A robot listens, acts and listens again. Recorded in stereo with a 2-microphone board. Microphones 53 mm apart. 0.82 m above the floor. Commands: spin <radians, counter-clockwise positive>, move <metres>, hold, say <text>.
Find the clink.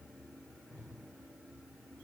hold
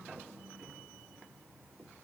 hold
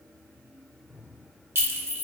spin -0.87
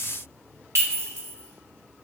spin -1.40
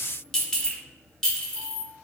spin 0.17
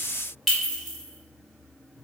say Found it: a clink, straight ahead, under 1 m away.